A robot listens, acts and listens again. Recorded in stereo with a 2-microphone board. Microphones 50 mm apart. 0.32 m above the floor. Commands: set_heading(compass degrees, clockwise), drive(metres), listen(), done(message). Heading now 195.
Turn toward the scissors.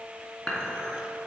listen()
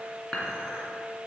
listen()
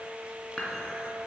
done("I can't make out scissors to turn to.")